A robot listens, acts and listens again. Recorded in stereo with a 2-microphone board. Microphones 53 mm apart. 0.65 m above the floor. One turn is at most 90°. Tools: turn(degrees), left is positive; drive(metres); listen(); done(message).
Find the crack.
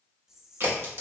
turn(degrees=-50)
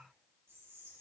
listen()
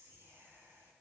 done("I heard a crack, but can't make it out now. It was about straight ahead or 80° right.")